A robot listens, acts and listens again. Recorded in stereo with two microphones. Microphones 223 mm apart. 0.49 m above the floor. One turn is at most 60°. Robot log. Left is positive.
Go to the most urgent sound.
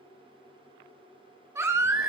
cmd yaw -30
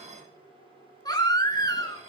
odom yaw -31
note: So it is at 20° left.
cmd yaw +20
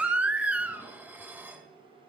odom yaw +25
cmd fwd 1.0
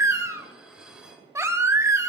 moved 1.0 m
note: The baby crying is now 15° right.
cmd yaw -15
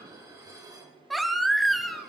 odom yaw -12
cmd fwd 1.0
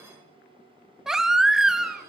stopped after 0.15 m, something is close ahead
end: I am next to the baby crying.